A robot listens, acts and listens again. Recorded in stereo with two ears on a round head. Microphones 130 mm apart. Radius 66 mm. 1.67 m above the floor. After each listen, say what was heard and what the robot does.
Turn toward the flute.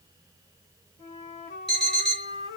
The flute: about 55° left or 125° left. Turn 55° left.
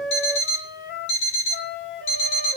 So it is at 70° left. Turn 70° left.
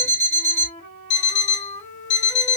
The flute is now 35° left. Turn 35° left.
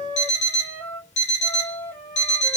The flute is now 15° left. Turn 15° left.
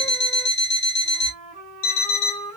Found it: a flute, straight ahead.